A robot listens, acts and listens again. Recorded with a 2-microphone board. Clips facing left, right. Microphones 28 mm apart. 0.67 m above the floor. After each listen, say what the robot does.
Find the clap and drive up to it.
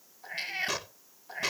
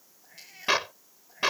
Turn 45° right.
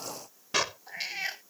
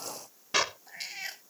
Drive 1.0 m forward.
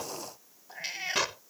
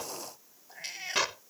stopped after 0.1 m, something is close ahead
Blocked. The clap is further on, straight ahead.